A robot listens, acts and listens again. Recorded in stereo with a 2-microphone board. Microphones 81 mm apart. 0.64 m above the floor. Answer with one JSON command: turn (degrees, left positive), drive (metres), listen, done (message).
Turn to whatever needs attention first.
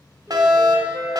{"turn": -55}
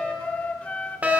{"turn": -20}
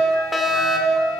{"done": "Found it: a fire alarm, straight ahead."}